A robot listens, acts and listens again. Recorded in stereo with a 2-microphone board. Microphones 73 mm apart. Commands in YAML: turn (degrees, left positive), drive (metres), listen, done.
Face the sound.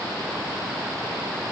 listen: true
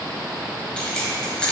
turn: 30
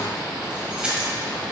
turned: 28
turn: -15
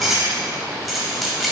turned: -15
done: "Found it: keys jangling, straight ahead."